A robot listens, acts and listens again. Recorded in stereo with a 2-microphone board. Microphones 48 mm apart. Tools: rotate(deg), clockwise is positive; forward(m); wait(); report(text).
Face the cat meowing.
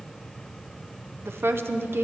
wait()
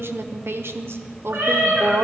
rotate(70)
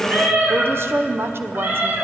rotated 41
rotate(40)
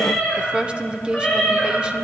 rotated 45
report("Found it: a cat meowing, straight ahead.")